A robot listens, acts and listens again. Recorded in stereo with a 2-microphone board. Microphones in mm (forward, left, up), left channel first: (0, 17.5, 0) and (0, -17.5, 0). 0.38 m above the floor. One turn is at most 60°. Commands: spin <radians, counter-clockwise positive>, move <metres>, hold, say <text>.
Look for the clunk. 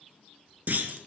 spin -1.05
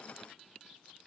hold
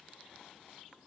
say I heard a clunk, but can't make it out now. It was about straight ahead or 60° right.